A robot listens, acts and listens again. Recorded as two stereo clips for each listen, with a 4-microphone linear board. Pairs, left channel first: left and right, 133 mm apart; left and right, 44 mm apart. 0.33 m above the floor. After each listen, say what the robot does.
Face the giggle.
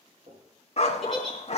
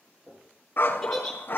Turn 30° left.
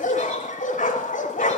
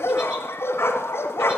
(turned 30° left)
Keep listening.
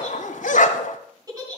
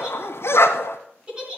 Turn 30° right.
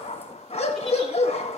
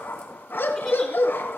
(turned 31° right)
Keep listening.
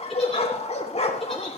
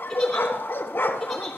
Keep listening.
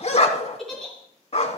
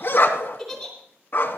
Facing the giggle.